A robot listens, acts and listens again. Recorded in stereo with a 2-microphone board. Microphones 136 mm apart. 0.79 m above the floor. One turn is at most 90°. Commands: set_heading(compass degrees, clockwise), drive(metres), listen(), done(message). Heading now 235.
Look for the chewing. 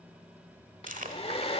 set_heading(325)
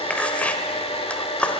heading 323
set_heading(313)
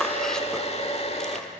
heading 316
listen()
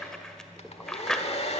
done("Facing the chewing, 1 to 2 m away.")